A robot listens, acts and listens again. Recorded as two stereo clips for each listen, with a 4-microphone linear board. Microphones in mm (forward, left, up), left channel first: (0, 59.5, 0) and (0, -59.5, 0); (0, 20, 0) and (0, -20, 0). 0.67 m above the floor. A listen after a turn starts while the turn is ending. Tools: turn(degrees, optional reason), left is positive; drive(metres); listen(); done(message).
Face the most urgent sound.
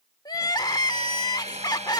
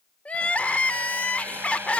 turn(degrees=35, reason="The crying: about 35° left or 145° left.")
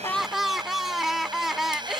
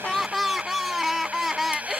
done("Facing the crying.")